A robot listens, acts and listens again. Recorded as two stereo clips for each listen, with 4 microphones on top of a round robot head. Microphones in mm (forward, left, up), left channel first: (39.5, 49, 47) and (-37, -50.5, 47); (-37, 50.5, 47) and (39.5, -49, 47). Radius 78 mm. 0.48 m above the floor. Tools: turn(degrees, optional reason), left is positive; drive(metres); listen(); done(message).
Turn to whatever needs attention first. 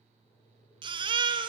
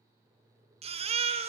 turn(degrees=-80, reason="The baby crying: 80° right.")
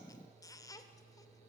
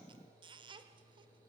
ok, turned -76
listen()
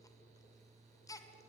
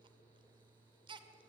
turn(degrees=-10, reason="The baby crying is now 10° right.")
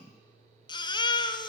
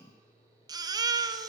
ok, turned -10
done("Facing the baby crying, 1 to 2 m away.")